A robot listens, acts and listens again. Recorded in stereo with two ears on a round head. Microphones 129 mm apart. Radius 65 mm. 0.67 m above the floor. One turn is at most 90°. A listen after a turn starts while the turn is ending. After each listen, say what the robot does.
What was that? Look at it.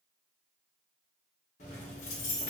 Turn 55° left.
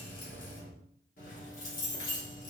Turn 65° left.
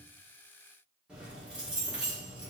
Turn 10° right.
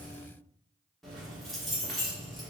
Found it: keys jangling, straight ahead.